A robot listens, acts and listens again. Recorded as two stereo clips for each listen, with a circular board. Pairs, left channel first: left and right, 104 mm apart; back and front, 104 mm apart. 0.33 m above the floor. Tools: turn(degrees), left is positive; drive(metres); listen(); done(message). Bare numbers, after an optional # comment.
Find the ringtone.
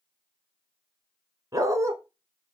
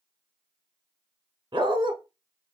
listen()
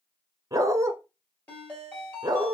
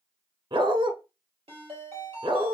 # The ringtone: 15° left.
turn(15)
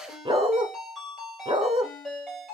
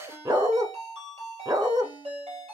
done("Found it: a ringtone, straight ahead, 2 to 4 m away.")